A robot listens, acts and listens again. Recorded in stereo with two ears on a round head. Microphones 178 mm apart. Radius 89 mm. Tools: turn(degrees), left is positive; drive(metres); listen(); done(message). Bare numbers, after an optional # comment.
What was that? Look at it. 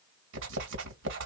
# The writing: about 65° right or 115° right.
turn(-65)
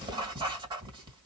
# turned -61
# So it is at 25° right.
turn(-25)
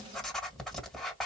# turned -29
done("Facing the writing, 2 to 4 m away.")